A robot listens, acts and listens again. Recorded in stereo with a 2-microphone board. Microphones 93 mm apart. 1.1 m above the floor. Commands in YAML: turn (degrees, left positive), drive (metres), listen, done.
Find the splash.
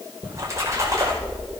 turn: -35
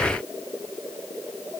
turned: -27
listen: true
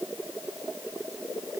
done: "I heard a splash, but can't make it out now. It was about 5° right or 120° right."